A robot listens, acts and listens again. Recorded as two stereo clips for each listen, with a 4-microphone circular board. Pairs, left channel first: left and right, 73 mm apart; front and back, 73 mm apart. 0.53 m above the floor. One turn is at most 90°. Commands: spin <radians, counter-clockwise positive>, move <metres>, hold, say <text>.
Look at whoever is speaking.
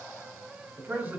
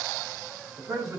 spin -1.57
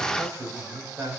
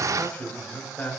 spin -1.13
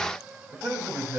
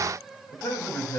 spin -0.35
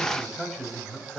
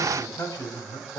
say Facing the man speaking, 2 to 4 m away.